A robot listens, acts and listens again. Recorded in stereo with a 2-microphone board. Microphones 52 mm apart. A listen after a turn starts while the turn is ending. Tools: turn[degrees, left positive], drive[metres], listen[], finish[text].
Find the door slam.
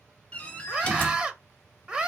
Thought: The door slam: about 20° left or 160° left.
Action: turn[20]
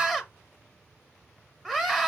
Action: listen[]
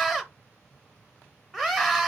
Action: finish[I heard a door slam, but can't make it out now. It was about straight ahead or 140° left.]